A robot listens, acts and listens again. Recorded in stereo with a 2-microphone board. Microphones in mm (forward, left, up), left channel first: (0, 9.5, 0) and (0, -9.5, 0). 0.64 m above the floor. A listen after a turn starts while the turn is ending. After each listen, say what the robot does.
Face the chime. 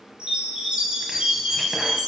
Turn 55° right.
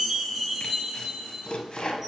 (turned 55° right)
Found it: a chime, straight ahead, 2 to 4 m away.